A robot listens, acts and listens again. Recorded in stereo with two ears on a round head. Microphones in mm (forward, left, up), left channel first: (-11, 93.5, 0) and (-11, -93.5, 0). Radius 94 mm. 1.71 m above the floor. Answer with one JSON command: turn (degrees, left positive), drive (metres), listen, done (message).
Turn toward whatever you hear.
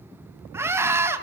{"turn": -30}
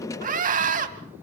{"turn": -140}
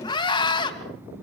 {"turn": 20}
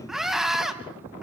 {"done": "Facing the scream, 2 to 4 m away."}